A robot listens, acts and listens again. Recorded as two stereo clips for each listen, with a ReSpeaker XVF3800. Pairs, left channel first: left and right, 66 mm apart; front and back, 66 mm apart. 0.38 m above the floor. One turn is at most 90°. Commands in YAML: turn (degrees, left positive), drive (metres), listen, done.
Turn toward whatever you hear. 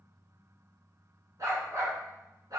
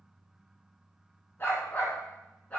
turn: -70
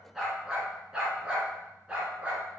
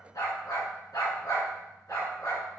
turn: -25
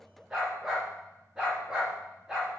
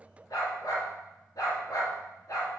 turn: -10
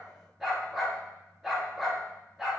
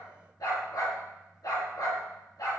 done: "Found it: a dog barking, straight ahead."